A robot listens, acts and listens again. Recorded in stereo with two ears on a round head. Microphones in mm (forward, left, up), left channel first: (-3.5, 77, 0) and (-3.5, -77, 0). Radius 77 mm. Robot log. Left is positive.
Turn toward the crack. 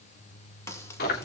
note: The crack: about 15° left or 165° left.
cmd yaw +15
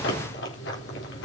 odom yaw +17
cmd idle
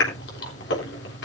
end: I heard a crack, but can't make it out now. It was about straight ahead or 145° left.